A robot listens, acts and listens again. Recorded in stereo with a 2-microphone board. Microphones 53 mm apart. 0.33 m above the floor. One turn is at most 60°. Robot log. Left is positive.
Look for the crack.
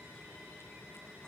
cmd idle
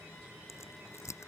note: The crack: about 75° left or 105° left.
cmd yaw +60
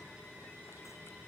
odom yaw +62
cmd idle
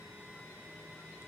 end: I heard a crack, but can't make it out now. It was about 10° left or 45° left.